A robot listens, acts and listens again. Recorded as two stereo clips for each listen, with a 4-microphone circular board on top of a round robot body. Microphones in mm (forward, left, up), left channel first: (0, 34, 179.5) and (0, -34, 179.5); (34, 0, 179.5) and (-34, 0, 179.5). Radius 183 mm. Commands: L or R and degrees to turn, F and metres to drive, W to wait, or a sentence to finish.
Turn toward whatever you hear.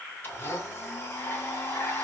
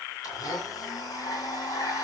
L30
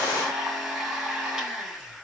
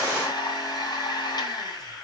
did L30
R10
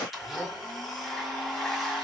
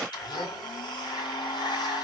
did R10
Facing the blender, 2 to 4 m away.